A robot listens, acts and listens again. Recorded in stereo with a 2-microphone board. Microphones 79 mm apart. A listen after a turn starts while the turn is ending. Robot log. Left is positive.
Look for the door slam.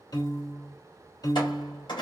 note: The door slam: about 75° left or 105° left.
cmd yaw +75
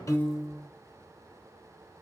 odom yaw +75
cmd idle
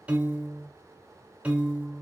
end: I heard a door slam, but can't make it out now. It was about straight ahead or 30° left.